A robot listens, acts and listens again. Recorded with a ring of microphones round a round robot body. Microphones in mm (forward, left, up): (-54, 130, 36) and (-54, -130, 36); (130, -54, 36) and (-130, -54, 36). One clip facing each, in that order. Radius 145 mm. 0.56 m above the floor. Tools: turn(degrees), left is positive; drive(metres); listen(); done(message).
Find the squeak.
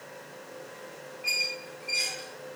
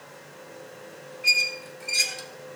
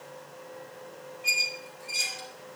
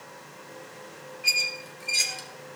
turn(degrees=-130)
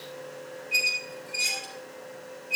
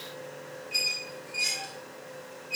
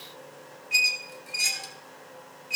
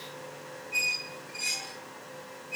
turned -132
done("Found it: a squeak, straight ahead.")